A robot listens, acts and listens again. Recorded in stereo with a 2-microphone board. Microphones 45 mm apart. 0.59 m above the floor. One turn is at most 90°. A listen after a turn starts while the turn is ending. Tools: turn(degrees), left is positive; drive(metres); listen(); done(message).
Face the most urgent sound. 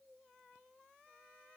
listen()
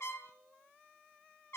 listen()
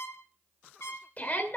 turn(degrees=35)
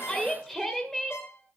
done("Facing the shout.")